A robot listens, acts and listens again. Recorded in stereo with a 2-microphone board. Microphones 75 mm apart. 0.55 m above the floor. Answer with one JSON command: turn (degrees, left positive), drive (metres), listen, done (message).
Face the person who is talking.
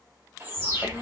{"turn": 90}
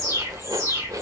{"listen": true}
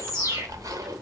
{"done": "Facing the child speaking."}